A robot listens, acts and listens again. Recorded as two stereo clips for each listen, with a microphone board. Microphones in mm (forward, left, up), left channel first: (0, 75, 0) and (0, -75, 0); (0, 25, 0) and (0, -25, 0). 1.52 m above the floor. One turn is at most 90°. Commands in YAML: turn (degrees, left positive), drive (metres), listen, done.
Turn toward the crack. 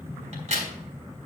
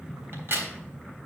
turn: -50
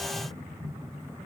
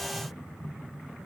listen: true
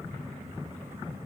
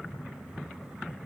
done: "I heard a crack, but can't make it out now. It was about straight ahead or 80° right."